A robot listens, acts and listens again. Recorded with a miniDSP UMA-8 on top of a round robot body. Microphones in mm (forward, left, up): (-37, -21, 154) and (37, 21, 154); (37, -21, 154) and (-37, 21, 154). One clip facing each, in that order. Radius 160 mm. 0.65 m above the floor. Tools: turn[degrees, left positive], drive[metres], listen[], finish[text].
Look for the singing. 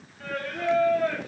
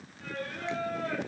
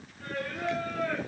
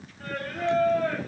Thought: The singing: 160° right.
Action: turn[-160]
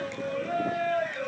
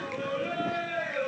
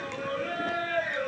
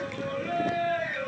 Thought: The singing is now 25° left.
Action: turn[25]
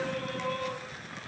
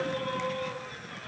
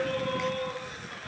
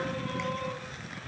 Action: finish[Found it: singing, straight ahead, over 4 m away.]